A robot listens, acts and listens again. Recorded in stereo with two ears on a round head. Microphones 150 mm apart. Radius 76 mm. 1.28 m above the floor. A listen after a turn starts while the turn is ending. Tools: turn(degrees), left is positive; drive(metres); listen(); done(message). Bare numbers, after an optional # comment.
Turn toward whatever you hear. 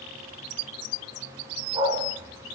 # The dog barking: about 25° right or 155° right.
turn(-25)
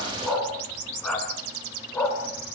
# So it is at 10° left.
turn(10)
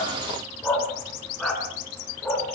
done("Facing the dog barking.")